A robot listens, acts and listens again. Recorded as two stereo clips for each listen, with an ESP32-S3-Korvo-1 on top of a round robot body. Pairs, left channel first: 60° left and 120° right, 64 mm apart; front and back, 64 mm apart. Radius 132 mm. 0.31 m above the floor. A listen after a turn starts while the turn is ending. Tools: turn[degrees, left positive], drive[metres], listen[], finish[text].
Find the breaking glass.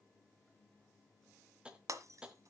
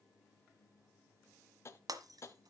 Thought: The breaking glass: 155° right.
Action: turn[-155]
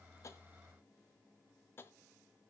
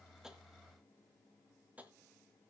Action: finish[Facing where the breaking glass came from. I can't hear it now.]